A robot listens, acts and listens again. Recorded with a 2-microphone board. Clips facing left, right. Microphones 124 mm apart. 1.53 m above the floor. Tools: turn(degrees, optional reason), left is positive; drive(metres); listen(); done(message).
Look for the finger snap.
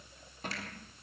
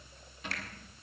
listen()
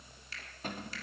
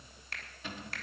turn(degrees=-55, reason="The finger snap: about 55° right or 125° right.")
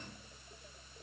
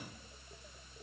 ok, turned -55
listen()
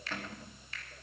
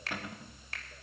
turn(degrees=-70, reason="So it is at 70° right.")
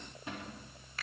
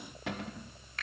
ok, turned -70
done("Found it: a finger snap, straight ahead, 2 to 4 m away.")